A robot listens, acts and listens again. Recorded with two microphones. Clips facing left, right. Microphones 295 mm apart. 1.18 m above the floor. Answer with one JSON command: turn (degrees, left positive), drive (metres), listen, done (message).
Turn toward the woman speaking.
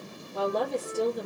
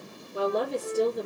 {"turn": 30}
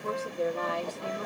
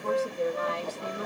{"turn": -20}
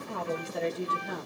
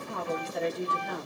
{"done": "Found it: a woman speaking, straight ahead, 1 to 2 m away."}